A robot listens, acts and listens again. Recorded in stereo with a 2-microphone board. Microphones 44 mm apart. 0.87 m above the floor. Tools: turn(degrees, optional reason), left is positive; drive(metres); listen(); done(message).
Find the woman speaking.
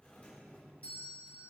listen()
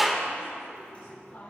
turn(degrees=65, reason="The woman speaking: about 65° left or 115° left.")
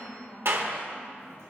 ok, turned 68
turn(degrees=45, reason="So it is at 45° left.")
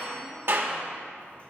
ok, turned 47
listen()
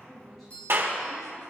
listen()
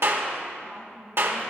turn(degrees=10, reason="The woman speaking is now 10° left.")
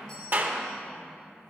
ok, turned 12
listen()
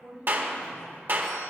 done("Facing the woman speaking.")